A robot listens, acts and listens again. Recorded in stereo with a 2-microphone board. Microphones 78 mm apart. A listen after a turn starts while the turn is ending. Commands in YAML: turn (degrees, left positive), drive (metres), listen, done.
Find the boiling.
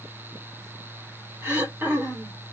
listen: true
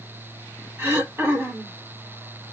listen: true
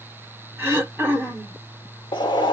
turn: 75
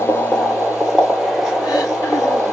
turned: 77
done: "Facing the boiling."